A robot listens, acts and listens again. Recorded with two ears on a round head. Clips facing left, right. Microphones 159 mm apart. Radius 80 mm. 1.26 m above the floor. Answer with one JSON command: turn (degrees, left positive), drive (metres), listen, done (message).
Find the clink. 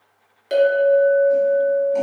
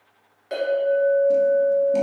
{"turn": 40}
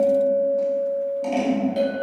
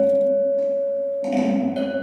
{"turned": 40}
{"done": "Facing the clink, 1 to 2 m away."}